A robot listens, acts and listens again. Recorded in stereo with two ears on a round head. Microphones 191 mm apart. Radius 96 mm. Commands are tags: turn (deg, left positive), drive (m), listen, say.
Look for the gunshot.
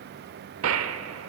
<turn deg="-70"/>
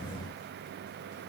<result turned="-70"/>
<listen/>
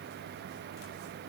<say>I heard a gunshot, but can't make it out now. It was about straight ahead or 40° right.</say>